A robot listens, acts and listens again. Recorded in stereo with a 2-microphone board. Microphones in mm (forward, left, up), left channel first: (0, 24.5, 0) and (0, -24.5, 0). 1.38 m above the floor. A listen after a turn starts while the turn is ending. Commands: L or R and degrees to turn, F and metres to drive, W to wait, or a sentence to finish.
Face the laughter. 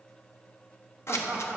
R25
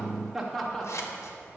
Facing the laughter.